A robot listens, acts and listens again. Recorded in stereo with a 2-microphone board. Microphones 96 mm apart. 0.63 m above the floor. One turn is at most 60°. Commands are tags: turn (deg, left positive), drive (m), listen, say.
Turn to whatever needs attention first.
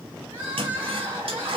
<turn deg="-25"/>
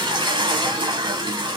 <listen/>
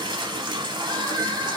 <turn deg="-60"/>
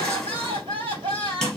<turn deg="-60"/>
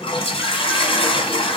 <listen/>
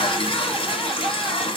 <listen/>
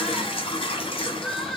<say>Found it: crying, straight ahead, 2 to 4 m away.</say>